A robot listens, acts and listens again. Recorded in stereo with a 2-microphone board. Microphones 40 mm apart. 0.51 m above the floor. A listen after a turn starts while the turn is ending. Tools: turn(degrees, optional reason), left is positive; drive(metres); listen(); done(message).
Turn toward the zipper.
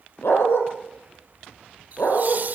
listen()
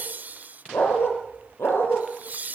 listen()
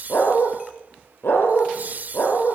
done("I can't make out a zipper to turn to.")